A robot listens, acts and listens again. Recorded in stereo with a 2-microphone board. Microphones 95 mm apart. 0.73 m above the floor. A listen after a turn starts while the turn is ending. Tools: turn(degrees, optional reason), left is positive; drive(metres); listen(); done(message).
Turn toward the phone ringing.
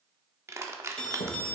turn(degrees=30)
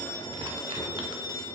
turn(degrees=135, reason="So it is at 135° left.")
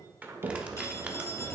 listen()
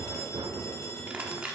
listen()
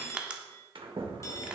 turn(degrees=30, reason="The phone ringing is now 30° left.")
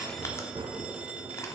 listen()
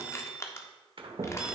turn(degrees=-10, reason="The phone ringing is now 10° right.")
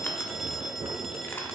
done("Found it: a phone ringing, straight ahead, under 1 m away.")